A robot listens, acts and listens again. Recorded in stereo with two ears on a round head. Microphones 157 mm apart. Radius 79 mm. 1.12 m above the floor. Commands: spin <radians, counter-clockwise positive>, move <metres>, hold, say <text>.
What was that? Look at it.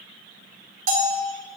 spin -0.87
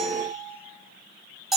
say Facing the bell.